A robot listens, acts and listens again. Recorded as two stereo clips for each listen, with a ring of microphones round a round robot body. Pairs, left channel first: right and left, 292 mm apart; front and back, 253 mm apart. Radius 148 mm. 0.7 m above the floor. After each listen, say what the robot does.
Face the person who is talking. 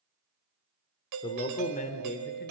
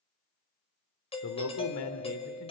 Turn 30° right.
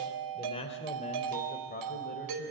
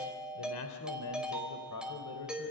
Turn 35° right.
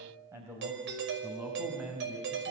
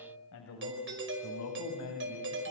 Facing the man speaking, over 4 m away.